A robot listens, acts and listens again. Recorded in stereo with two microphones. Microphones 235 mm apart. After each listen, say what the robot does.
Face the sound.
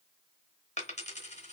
Turn 30° left.
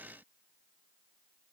Keep listening.
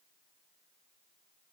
I heard a dropped coin, but can't make it out now. It was about straight ahead or 120° left.